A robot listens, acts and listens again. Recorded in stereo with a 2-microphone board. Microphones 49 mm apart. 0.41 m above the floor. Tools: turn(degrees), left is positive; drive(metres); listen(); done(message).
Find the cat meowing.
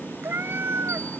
turn(degrees=-60)
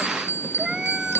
turn(degrees=-10)
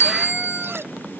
listen()
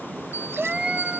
turn(degrees=-20)
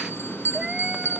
listen()
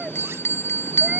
listen()
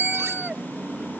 done("I heard a cat meowing from this way, but can't make it out now.")